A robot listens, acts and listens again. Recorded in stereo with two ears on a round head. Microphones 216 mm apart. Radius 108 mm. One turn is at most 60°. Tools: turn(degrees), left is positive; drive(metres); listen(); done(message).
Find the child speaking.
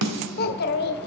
turn(degrees=45)
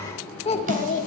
turn(degrees=35)
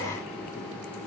listen()
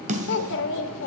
turn(degrees=55)
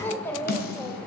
turn(degrees=10)
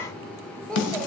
done("Found it: a child speaking, straight ahead.")